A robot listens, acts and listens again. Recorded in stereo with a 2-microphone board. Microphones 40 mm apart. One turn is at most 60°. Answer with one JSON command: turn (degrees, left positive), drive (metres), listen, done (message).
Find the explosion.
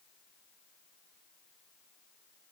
{"listen": true}
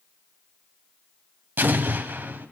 {"turn": -60}
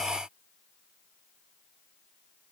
{"listen": true}
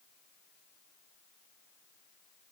{"done": "I heard an explosion, but can't make it out now. It was about straight ahead or 60° right."}